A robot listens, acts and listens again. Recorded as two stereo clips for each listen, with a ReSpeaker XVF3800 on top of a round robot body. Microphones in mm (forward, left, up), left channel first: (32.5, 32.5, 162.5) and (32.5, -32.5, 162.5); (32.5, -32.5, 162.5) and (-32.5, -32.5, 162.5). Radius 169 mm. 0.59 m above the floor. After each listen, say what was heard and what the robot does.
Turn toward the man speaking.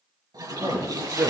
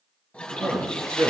The man speaking: 145° right. Turn 145° right.
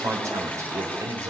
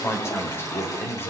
The man speaking is now 55° right. Turn 55° right.
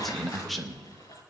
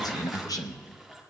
Found it: a man speaking, straight ahead.